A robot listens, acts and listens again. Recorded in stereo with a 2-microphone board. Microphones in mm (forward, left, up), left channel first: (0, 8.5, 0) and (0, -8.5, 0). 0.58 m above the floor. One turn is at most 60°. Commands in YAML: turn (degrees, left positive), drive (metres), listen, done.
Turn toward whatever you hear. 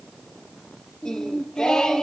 turn: 60
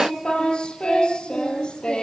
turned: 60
turn: 55
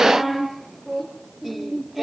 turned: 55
turn: -15
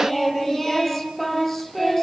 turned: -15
done: "Found it: singing, straight ahead."